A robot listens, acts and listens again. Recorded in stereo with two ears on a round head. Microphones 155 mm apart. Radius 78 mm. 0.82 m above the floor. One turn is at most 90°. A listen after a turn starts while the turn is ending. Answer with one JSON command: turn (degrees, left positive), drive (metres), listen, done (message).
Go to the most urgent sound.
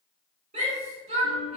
{"turn": -45}
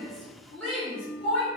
{"drive": 1.0}
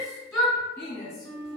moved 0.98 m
{"drive": 1.0}
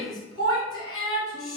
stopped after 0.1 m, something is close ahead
{"done": "I am next to the shout."}